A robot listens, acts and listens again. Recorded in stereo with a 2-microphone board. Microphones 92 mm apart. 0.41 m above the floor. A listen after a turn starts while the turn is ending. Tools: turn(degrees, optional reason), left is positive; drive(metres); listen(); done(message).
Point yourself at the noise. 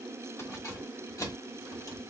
turn(degrees=45, reason="The keys jangling: about 45° left or 135° left.")
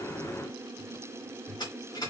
turn(degrees=45, reason="So it is at 45° left.")
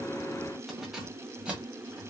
turn(degrees=-15, reason="The keys jangling is now 15° right.")
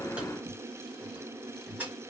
turn(degrees=-20, reason="The keys jangling is now 20° right.")
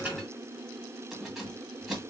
done("Found it: keys jangling, straight ahead.")